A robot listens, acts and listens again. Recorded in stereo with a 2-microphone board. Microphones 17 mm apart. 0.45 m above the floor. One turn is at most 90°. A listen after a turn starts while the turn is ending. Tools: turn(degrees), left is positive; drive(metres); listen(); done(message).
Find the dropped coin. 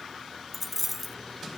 turn(degrees=-30)
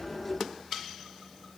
listen()
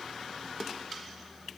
done("I heard a dropped coin, but can't make it out now. It was about 20° left or 140° right.")